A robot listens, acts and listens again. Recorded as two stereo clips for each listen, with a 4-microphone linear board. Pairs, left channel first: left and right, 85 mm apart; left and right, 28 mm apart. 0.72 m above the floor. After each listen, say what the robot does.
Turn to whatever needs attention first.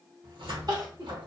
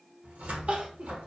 Turn 50° right.
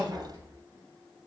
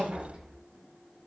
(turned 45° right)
Turn 85° right.
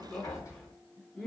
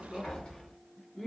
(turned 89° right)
Facing the crying.